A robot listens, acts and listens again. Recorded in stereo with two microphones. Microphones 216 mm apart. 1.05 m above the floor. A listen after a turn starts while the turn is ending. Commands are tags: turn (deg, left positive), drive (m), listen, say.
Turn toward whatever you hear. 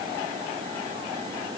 <listen/>
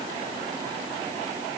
<listen/>
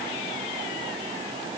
<say>I can't make out anything.</say>